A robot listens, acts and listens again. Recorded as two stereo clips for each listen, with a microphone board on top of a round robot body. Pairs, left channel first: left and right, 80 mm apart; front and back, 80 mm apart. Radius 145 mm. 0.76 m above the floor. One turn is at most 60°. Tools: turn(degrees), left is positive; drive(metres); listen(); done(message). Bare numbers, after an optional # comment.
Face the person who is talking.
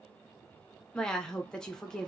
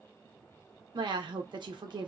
# The woman speaking: 170° left.
turn(60)
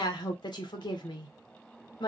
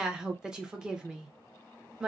# The woman speaking is now 100° left.
turn(60)
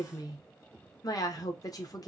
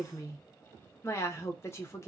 # The woman speaking is now 55° left.
turn(55)
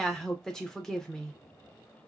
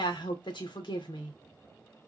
done("Found it: a woman speaking, straight ahead.")